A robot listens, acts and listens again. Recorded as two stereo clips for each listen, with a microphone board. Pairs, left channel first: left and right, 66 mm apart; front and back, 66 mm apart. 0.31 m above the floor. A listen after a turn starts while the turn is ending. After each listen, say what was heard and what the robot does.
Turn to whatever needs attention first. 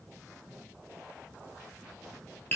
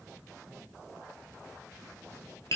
Keep listening.
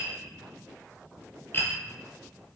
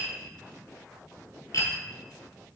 Keep listening.
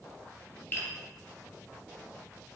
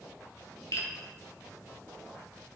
I can't make out anything urgent, only tapping.